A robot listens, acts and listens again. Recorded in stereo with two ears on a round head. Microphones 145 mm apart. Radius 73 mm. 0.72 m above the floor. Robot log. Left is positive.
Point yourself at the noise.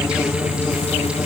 cmd idle
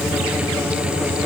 cmd idle
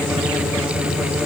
end: I can't make out anything.